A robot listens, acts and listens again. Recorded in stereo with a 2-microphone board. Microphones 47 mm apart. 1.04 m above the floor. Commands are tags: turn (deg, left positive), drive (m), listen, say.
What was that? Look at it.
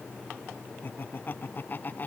<turn deg="40"/>
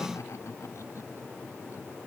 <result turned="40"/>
<listen/>
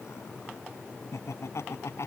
<turn deg="110"/>
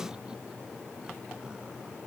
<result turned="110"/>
<listen/>
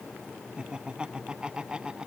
<turn deg="-20"/>
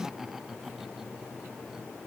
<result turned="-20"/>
<say>Facing the laughter.</say>